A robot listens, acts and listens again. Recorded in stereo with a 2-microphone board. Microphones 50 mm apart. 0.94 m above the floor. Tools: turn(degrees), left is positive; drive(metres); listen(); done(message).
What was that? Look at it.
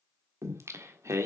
turn(degrees=-65)
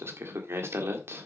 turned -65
turn(degrees=-50)
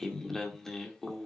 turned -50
turn(degrees=10)
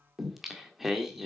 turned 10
done("Facing the singing.")